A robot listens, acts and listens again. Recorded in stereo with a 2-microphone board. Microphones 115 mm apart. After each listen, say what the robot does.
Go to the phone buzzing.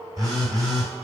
Turn 35° right.
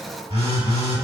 Turn 100° right.
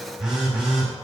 Drive 1.0 m forward.
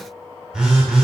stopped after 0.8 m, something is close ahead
Turn 10° right.
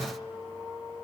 Keep listening.
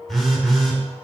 Arrived at the phone buzzing, straight ahead.